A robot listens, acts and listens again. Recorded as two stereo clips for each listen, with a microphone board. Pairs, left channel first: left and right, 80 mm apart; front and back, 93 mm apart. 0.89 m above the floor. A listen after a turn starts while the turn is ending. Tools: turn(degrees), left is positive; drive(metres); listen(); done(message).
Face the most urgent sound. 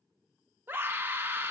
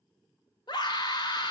turn(degrees=-30)
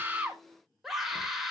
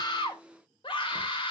done("Facing the scream.")